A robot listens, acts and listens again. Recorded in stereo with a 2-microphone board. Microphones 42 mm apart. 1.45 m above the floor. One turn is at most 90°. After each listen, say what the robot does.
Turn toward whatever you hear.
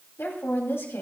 Turn 90° left.
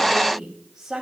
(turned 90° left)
Turn 15° right.
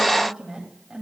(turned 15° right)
Turn 15° right.
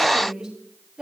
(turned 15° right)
Turn 20° right.
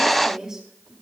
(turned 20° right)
Turn 10° right.
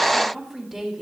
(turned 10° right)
Facing the woman speaking.